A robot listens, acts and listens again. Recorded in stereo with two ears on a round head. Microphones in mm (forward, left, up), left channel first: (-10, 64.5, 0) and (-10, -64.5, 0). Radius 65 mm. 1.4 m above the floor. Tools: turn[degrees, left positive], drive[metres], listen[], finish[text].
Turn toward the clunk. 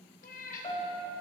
Action: listen[]
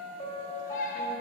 Action: listen[]
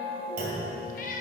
Thought: The clunk: about 65° right or 115° right.
Action: turn[-65]
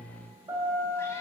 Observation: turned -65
Action: listen[]
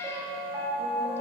Action: finish[I heard a clunk, but can't make it out now. It was about straight ahead or 50° right.]